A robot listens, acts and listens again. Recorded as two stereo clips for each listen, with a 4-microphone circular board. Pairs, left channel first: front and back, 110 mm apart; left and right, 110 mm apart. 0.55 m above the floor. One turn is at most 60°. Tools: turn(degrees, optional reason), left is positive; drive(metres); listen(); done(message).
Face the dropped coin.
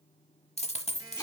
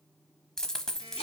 done("Facing the dropped coin.")